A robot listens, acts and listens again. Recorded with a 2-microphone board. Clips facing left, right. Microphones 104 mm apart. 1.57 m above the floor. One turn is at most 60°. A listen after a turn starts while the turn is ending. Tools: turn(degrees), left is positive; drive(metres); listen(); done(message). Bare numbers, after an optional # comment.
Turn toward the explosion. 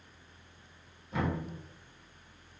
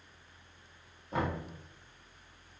listen()
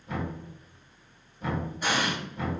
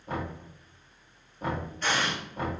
turn(30)
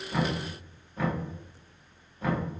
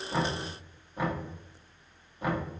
listen()
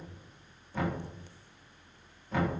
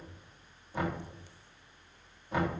done("I heard an explosion, but can't make it out now. It was about 20° right or 140° left.")